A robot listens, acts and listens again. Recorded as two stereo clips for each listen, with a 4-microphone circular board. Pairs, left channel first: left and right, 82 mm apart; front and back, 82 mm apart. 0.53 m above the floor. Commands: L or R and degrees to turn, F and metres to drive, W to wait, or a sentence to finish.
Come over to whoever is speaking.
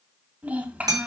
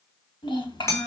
R20
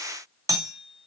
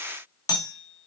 W
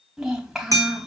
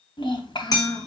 F1.0
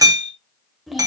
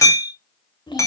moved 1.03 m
F1.0
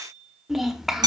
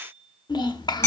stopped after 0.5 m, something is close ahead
Arrived at the child speaking, straight ahead.